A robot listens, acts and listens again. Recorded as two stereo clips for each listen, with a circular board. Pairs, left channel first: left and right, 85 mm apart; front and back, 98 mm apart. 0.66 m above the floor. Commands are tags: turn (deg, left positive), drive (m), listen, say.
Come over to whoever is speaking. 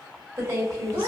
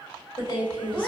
<turn deg="-30"/>
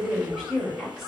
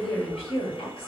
<drive m="1.0"/>
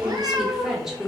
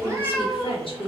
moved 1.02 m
<drive m="1.0"/>
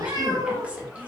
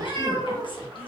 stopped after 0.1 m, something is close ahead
<listen/>
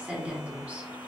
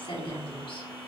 <turn deg="-15"/>
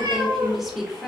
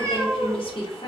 <say>I am next to the woman speaking.</say>